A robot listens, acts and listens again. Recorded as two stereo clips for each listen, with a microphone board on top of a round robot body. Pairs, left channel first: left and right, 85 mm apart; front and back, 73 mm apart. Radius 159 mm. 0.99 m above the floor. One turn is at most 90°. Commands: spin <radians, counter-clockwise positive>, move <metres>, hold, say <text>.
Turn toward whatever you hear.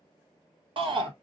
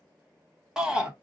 spin -1.57
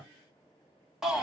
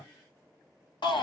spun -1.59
say Found it: a shout, straight ahead.